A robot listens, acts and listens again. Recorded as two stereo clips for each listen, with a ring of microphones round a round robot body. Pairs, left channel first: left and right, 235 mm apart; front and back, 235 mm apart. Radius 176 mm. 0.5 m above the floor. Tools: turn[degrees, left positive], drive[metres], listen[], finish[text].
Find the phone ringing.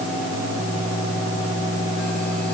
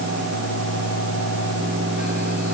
Action: listen[]
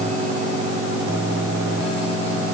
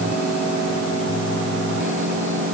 Action: listen[]
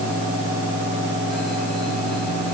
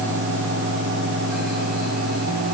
Action: finish[I can't make out a phone ringing to turn to.]